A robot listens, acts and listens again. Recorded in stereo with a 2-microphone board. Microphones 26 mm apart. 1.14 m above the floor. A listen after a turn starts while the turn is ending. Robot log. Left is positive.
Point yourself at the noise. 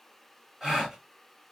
cmd yaw -30
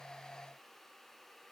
cmd idle
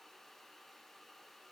end: I heard a gasp, but can't make it out now. It was about 20° left or 140° right.